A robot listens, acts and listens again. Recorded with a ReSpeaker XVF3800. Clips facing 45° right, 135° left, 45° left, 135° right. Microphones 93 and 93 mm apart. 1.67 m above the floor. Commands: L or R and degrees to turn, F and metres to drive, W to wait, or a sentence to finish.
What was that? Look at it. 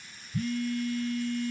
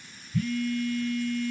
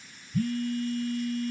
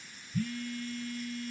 L15
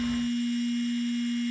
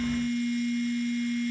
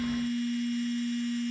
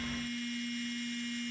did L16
Found it: a phone buzzing, straight ahead.